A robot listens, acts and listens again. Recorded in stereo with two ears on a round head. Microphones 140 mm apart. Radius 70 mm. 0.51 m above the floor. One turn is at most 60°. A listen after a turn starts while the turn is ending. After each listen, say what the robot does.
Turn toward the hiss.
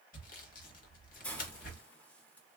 Turn 30° left.
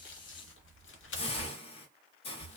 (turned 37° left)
Turn 60° left.
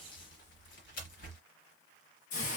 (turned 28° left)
Turn 60° left.
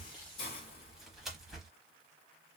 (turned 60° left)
Turn 45° left.
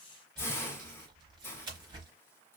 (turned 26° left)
Turn 20° left.
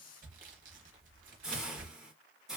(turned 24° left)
Facing the hiss.